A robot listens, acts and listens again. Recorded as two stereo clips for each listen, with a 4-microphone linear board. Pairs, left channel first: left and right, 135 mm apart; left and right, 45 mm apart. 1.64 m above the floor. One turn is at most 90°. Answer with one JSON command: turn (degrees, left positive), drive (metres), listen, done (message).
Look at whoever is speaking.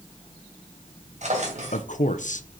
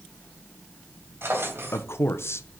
{"turn": 65}
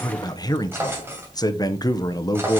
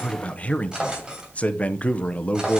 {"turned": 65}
{"turn": 30}
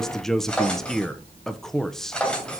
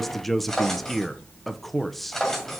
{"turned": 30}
{"done": "Found it: a man speaking, straight ahead, under 1 m away."}